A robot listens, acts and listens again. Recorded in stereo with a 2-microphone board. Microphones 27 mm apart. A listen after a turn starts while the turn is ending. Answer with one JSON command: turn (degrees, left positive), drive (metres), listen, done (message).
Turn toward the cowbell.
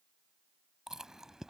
{"listen": true}
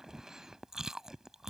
{"listen": true}
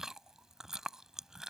{"done": "I can't make out a cowbell, only chewing."}